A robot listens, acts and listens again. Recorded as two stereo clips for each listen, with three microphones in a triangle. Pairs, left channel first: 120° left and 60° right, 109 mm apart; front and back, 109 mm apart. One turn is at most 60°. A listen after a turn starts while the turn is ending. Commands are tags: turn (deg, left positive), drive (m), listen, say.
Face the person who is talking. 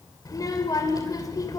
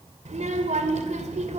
<turn deg="60"/>
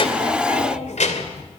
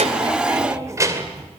<turn deg="60"/>
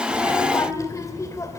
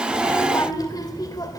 <turn deg="60"/>
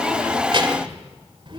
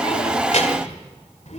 <turn deg="-15"/>
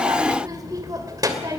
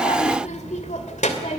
<say>Facing the child speaking.</say>